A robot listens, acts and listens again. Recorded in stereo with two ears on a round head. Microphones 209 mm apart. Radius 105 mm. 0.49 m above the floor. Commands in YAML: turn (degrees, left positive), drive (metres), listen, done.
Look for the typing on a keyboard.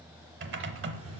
turn: -50
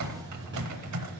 turn: -80
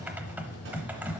done: "Facing the typing on a keyboard."